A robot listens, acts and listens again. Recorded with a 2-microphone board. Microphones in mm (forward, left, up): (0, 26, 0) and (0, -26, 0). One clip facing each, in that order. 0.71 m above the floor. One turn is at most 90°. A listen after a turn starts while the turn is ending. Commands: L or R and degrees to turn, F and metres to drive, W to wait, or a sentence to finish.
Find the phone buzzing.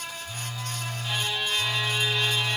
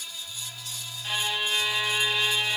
L65
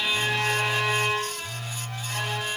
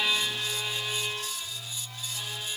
L50
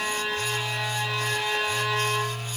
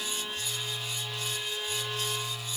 L10
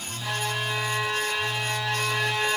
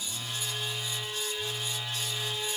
Facing the phone buzzing.